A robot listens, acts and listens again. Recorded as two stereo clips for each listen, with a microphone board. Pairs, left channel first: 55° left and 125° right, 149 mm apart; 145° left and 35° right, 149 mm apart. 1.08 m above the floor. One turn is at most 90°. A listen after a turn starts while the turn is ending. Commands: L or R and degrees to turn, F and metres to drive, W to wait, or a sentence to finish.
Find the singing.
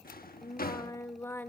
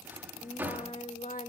L90
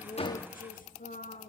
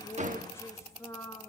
L85
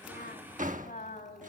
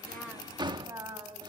L35
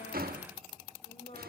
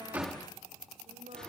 W
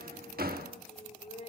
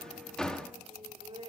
L15
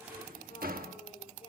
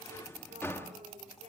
Found it: singing, straight ahead.